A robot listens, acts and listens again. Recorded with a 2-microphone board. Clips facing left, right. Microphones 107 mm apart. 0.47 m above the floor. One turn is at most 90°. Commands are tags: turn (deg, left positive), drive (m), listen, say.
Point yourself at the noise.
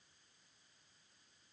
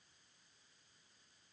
<listen/>
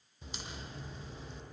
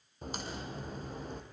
<turn deg="-50"/>
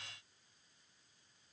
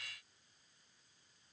<listen/>
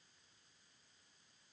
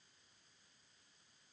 <say>I heard a crack, but can't make it out now. It was about straight ahead or 80° right.</say>